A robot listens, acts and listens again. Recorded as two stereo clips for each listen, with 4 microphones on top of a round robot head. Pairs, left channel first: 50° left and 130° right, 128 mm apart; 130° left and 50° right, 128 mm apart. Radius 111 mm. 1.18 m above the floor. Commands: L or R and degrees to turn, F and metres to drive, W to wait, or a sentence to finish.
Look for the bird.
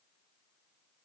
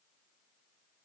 W
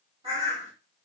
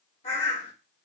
L175
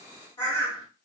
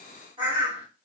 Found it: a bird, straight ahead, 1 to 2 m away.